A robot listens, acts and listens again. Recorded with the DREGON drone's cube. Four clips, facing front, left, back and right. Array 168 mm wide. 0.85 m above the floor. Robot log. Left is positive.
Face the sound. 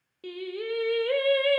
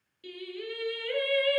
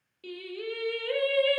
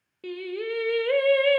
note: The singing: 65° right.
cmd yaw -65
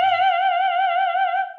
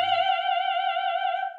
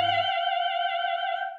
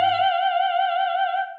note: The singing is now 20° right.
cmd yaw -20
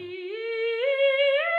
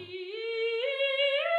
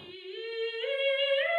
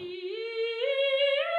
end: Found it: singing, straight ahead, under 1 m away.